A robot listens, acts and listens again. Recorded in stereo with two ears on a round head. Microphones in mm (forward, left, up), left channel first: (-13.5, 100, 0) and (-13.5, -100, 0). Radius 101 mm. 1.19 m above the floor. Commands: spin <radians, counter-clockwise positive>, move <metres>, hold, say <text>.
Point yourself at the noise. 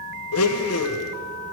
spin 1.22
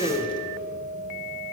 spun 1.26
spin 0.35
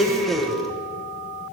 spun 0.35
say Found it: a blender, straight ahead.